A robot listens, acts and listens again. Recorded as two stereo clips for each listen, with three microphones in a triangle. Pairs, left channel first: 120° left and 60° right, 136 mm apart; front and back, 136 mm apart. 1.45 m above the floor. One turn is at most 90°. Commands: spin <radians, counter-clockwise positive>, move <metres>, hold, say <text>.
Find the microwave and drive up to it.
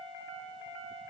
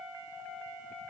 hold
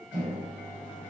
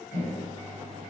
spin 0.26
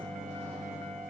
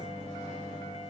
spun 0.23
move 1.0
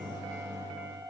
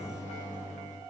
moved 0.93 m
move 1.0
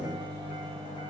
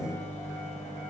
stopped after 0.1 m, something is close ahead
spin -0.17
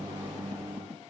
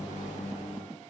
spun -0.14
say I am next to the microwave.